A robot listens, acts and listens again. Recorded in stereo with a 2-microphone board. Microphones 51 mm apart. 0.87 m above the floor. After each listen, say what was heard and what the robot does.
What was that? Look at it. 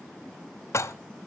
The dishes clattering: about 70° left or 110° left. Turn 70° left.
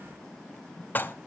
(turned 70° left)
So it is at 35° left. Turn 35° left.
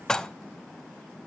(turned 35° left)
The dishes clattering is now 10° left. Turn 10° left.
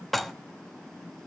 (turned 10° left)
Found it: dishes clattering, straight ahead, under 1 m away.